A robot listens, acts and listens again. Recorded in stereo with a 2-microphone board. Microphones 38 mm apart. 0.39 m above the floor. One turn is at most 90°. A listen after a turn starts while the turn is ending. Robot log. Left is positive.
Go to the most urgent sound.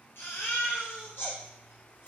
note: The baby crying: about 70° left or 110° left.
cmd yaw +70
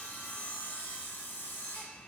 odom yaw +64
cmd idle
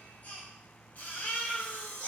note: So it is at 45° left.
cmd yaw +45
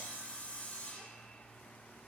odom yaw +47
cmd idle
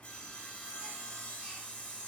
cmd idle
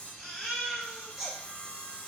cmd fwd 1.0
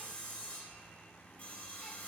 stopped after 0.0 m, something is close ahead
cmd idle
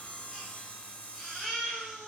end: Something is in my way. I am facing the baby crying but have not reached it.